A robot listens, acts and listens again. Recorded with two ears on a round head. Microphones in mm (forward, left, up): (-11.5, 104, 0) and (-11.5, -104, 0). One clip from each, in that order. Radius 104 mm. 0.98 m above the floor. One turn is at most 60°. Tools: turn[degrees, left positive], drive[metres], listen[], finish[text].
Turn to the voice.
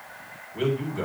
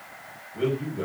Action: turn[60]
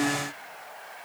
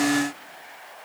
Thought: Nothing new. It was at 30° left.
Action: turn[30]
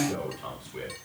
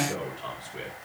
Action: finish[Found it: a man speaking, straight ahead.]